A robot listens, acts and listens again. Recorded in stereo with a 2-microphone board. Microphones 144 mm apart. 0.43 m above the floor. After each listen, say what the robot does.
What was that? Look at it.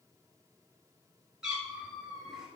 Turn 30° right.
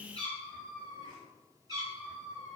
Turn 150° right.
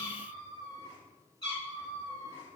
Turn 30° left.
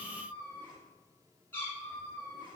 Turn 15° left.
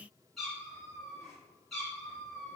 Found it: a cat meowing, straight ahead.